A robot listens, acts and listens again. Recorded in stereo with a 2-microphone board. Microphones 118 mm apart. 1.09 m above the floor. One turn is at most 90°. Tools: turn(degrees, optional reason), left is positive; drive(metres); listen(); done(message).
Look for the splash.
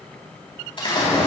turn(degrees=45, reason="The splash: about 45° left or 135° left.")
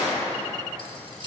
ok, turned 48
turn(degrees=90, reason="So it is at 90° left.")
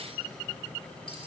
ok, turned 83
done("Facing where the splash came from. I can't hear it now.")